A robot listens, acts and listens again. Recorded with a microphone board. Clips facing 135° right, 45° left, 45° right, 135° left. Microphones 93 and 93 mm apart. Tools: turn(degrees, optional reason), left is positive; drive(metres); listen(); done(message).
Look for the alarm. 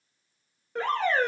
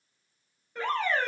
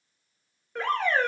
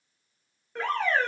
turn(degrees=-135, reason="The alarm: 135° right.")
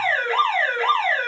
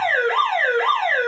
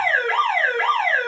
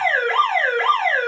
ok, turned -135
turn(degrees=40, reason="The alarm is now 40° left.")
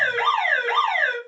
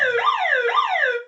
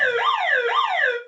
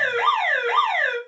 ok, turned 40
turn(degrees=-10, reason="The alarm is now 10° right.")
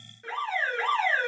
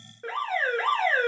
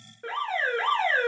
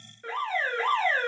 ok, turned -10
done("Found it: an alarm, straight ahead, 1 to 2 m away.")